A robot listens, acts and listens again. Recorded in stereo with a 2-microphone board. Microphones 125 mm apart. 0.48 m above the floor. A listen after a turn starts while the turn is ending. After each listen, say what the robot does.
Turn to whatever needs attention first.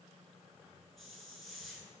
Keep listening.
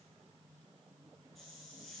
Keep listening.
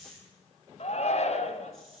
Turn 60° left.
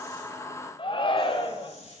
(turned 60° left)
Turn 45° left.
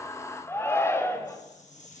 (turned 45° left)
Turn 20° left.
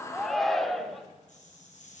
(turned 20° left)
Found it: a shout, straight ahead, 2 to 4 m away.